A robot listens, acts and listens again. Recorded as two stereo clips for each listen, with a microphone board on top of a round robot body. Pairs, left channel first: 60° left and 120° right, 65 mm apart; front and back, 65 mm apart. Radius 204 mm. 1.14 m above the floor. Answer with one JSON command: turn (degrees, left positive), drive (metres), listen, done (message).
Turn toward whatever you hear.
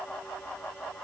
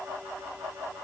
{"listen": true}
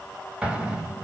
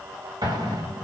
{"turn": 165}
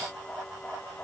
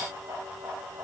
{"done": "Facing where the explosion came from. I can't hear it now."}